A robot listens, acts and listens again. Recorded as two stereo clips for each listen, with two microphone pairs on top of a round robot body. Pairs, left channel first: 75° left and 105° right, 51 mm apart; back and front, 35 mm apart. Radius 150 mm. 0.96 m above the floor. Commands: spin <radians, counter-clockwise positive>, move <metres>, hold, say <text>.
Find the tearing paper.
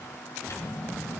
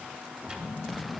hold
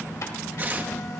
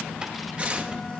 spin -0.87
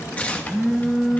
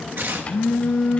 spin 0.17
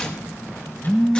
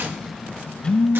say Found it: tearing paper, straight ahead, 1 to 2 m away.